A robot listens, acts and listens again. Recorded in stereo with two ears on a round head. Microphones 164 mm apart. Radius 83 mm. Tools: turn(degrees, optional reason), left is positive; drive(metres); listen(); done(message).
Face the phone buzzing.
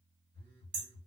turn(degrees=-50, reason="The phone buzzing: about 50° right or 130° right.")
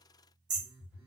turn(degrees=-10, reason="So it is at 10° right.")
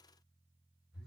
done("Facing the phone buzzing, 1 to 2 m away.")